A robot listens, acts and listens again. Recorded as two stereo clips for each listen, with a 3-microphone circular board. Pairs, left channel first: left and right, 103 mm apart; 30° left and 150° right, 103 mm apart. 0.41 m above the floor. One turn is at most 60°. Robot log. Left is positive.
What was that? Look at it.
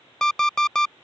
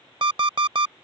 note: The alarm clock: 175° left.
cmd yaw +60
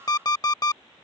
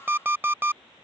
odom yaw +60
note: The alarm clock is now 140° left.
cmd yaw +60
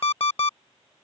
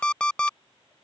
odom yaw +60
note: The alarm clock is now 110° left.
cmd yaw +60
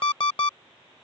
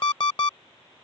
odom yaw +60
note: The alarm clock is now 65° left.
cmd yaw +60
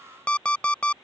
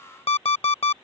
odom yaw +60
note: The alarm clock is now 15° left.
cmd yaw +15
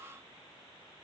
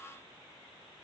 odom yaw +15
cmd idle
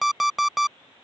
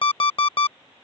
end: Found it: an alarm clock, straight ahead.